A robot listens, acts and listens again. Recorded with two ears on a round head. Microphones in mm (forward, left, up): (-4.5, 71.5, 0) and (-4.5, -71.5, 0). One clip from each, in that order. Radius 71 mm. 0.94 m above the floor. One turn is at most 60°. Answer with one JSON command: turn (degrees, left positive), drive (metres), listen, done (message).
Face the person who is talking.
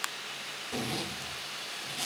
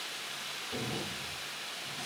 {"listen": true}
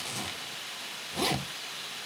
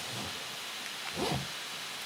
{"listen": true}
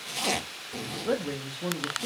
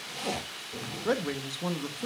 {"turn": -45}
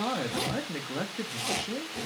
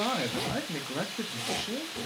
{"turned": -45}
{"turn": -10}
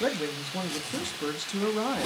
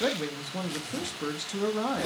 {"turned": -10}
{"done": "Facing the man speaking."}